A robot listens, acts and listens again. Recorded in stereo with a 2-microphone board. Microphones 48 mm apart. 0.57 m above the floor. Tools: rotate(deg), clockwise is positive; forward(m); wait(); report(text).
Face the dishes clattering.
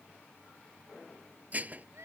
rotate(35)
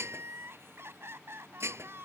rotate(110)
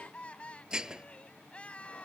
rotate(15)
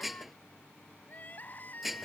report("Found it: dishes clattering, straight ahead.")